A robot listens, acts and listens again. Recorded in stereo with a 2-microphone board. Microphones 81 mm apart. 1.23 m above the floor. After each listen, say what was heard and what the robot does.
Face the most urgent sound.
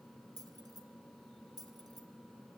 Keep listening.
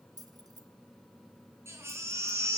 The baby crying: about 35° right or 145° right. Turn 35° right.
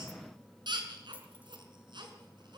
So it is at 105° right. Turn 105° right.
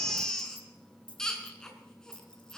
The baby crying is now 10° left. Turn 10° left.
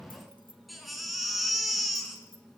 Found it: a baby crying, straight ahead.